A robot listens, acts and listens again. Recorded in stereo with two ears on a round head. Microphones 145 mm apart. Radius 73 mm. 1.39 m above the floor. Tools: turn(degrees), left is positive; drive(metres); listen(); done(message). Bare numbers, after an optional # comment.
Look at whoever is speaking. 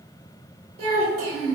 # The child speaking: about 65° right or 115° right.
turn(-65)
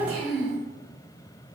# So it is at 20° right.
turn(-20)
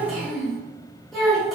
done("Found it: a child speaking, straight ahead.")